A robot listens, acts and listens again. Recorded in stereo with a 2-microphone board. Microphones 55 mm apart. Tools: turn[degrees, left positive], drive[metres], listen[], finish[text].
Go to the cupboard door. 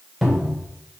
Action: turn[30]
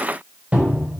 Thought: So it is at 30° right.
Action: turn[-30]
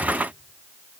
Action: listen[]
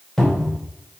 Thought: The cupboard door is now 10° left.
Action: turn[10]
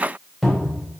Action: drive[1.0]
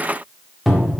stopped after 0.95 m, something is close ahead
Action: finish[I am next to the cupboard door.]